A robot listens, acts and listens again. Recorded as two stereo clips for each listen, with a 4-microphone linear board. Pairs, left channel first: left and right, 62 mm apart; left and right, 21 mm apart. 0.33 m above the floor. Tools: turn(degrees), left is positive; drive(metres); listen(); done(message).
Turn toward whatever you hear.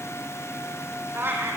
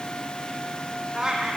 turn(degrees=-35)
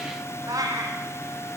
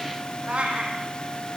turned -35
turn(degrees=-110)
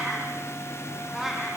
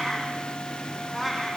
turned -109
done("Facing the cat meowing.")